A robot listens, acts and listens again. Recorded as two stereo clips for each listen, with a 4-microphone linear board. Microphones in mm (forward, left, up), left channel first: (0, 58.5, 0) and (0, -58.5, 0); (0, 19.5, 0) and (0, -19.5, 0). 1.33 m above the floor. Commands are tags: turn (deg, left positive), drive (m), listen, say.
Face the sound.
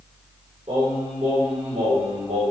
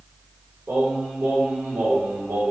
<turn deg="-65"/>
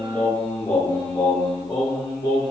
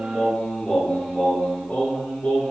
<turn deg="45"/>
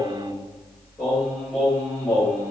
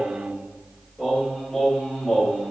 <turn deg="20"/>
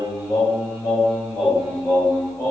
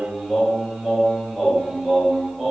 <say>Found it: singing, straight ahead, 2 to 4 m away.</say>